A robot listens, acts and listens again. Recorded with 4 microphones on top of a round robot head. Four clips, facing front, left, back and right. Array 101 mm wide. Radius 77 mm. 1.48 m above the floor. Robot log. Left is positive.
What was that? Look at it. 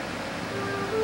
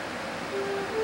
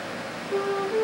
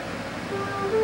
note: The flute: 145° right.
cmd yaw -145
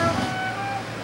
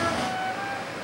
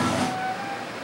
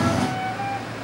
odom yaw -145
note: The flute is now 25° right.
cmd yaw -25
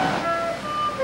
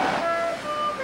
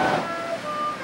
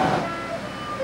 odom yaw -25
end: Found it: a flute, straight ahead.